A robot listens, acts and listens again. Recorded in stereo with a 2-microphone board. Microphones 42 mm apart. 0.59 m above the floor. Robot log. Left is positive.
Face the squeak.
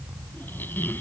note: The squeak: about 60° left or 120° left.
cmd yaw +60
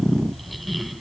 end: Found it: a squeak, straight ahead.